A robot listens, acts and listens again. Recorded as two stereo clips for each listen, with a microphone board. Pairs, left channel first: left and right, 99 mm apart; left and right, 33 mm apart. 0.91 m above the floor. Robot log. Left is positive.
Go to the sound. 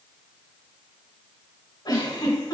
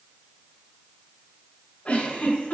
note: The giggle: about 50° left or 130° left.
cmd yaw +50
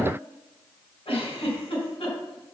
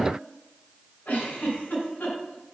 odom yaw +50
note: So it is at 80° left.
cmd yaw +80
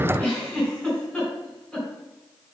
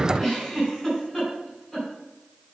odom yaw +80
note: The giggle is now 10° left.
cmd yaw +10
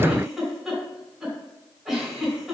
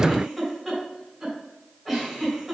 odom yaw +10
cmd fwd 1.0
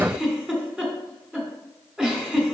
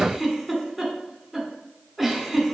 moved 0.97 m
note: The giggle is now 10° right.
cmd yaw -10
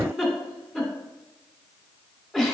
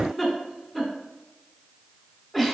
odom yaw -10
cmd fwd 1.0
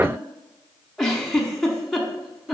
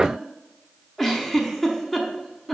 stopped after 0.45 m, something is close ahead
end: Arrived at the giggle, straight ahead.